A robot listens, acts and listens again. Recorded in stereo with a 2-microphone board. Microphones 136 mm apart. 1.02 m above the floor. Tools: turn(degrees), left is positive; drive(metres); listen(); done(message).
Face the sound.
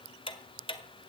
turn(degrees=40)
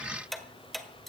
done("Facing the ticking, 1 to 2 m away.")